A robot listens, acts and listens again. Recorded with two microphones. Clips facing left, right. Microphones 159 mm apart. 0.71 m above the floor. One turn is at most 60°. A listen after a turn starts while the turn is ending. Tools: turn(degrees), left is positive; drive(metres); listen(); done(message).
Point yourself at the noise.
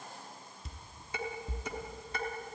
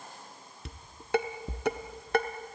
turn(degrees=-60)
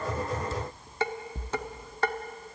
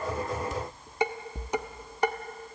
turn(degrees=-15)
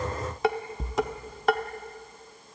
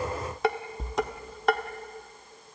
done("Found it: dishes clattering, straight ahead.")